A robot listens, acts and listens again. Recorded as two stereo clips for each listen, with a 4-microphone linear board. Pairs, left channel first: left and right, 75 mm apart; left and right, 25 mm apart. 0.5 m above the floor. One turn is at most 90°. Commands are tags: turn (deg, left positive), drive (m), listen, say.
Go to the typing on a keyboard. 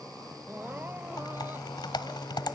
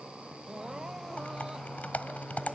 <turn deg="75"/>
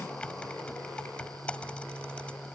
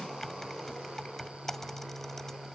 <turn deg="15"/>
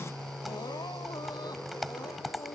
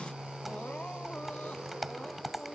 <drive m="1.0"/>
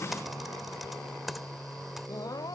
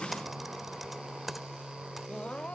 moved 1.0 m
<drive m="1.0"/>
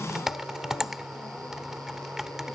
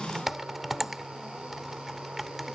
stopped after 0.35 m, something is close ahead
<say>Arrived at the typing on a keyboard, straight ahead.</say>